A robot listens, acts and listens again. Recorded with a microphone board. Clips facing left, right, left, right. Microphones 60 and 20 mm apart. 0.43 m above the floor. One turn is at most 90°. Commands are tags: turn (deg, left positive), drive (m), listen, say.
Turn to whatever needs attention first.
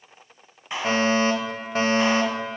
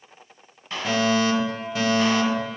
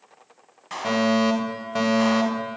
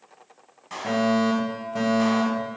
<turn deg="40"/>
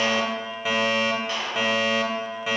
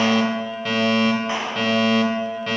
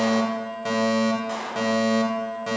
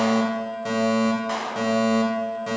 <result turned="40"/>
<turn deg="10"/>
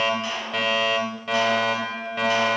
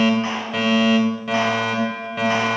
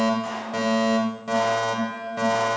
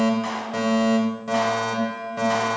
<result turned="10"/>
<say>Facing the fire alarm.</say>